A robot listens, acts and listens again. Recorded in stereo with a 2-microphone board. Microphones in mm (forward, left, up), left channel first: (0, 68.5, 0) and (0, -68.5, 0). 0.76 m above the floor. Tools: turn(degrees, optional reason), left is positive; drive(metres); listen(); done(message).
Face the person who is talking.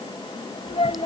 turn(degrees=50, reason="The child speaking: about 50° left or 130° left.")
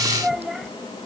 done("Found it: a child speaking, straight ahead.")